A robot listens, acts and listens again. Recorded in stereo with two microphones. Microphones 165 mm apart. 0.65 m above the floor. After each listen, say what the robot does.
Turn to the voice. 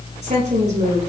Turn 50° right.
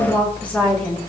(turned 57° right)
Facing the woman speaking.